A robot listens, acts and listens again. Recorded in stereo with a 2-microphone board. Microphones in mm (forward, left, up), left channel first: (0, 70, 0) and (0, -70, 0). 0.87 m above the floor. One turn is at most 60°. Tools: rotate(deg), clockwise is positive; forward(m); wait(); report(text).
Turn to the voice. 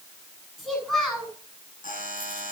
rotate(-30)
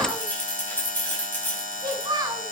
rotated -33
rotate(30)
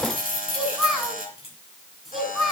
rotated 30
report("Facing the child speaking, over 4 m away.")